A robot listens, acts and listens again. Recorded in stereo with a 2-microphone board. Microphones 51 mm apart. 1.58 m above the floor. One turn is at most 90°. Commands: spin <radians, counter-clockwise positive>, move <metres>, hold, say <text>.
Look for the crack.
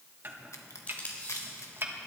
spin 1.57
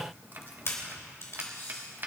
say I heard a crack from this way, but can't make it out now.